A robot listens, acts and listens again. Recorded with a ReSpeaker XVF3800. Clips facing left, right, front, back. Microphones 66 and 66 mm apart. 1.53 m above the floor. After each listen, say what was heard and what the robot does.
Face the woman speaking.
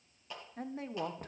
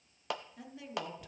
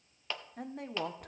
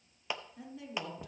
The woman speaking: 40° left. Turn 40° left.
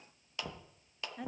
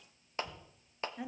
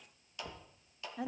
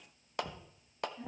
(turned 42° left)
Facing the woman speaking, 1 to 2 m away.